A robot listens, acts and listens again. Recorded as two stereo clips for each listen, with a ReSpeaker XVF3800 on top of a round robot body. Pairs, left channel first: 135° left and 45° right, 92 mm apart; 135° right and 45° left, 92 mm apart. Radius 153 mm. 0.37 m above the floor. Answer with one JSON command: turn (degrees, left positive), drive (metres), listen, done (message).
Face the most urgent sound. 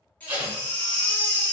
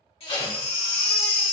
{"turn": -150}
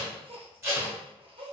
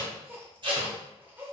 {"listen": true}
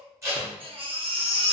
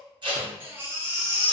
{"turn": -25}
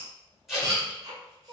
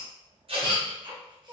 {"done": "Found it: a baby crying, straight ahead, 1 to 2 m away."}